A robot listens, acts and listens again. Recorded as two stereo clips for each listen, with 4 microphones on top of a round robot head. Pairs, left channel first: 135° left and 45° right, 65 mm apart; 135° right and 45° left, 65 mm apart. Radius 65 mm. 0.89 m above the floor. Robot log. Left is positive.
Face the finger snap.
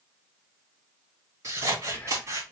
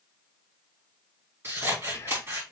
cmd idle
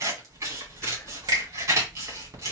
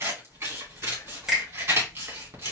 note: The finger snap: 35° right.
cmd yaw -35
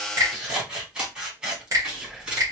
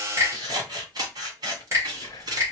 end: Facing the finger snap, 2 to 4 m away.